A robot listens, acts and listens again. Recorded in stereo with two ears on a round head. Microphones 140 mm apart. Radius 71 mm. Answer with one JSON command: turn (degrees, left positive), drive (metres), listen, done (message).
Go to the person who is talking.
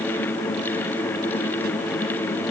{"listen": true}
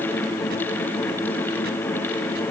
{"listen": true}
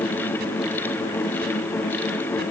{"done": "I can't make out anyone speaking to turn to."}